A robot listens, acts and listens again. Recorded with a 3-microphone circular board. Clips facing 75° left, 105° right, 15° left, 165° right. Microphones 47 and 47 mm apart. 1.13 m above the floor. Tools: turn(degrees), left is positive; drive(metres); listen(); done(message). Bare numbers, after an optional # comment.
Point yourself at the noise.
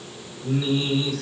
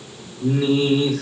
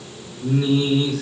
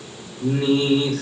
# The singing: 120° right.
turn(-120)
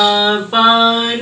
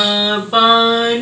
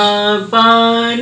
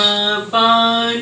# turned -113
done("Facing the singing.")